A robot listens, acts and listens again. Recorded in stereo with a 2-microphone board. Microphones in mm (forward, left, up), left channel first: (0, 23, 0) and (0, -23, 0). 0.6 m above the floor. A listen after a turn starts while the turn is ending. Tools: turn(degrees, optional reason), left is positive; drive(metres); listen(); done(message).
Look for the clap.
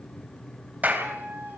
turn(degrees=-40, reason="The clap: about 40° right or 140° right.")
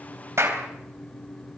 turn(degrees=-105, reason="So it is at 105° right.")
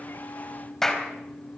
turn(degrees=10, reason="The clap is now 10° left.")
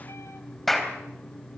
done("Facing the clap, 2 to 4 m away.")